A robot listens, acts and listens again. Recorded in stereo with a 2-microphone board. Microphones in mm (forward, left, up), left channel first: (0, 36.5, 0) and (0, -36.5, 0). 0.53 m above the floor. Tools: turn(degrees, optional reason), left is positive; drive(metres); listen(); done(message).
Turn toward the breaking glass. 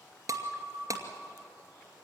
turn(degrees=-50, reason="The breaking glass: about 50° right or 130° right.")
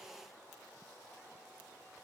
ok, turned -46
listen()
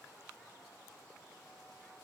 done("I heard breaking glass, but can't make it out now. It was about 5° right or 85° right.")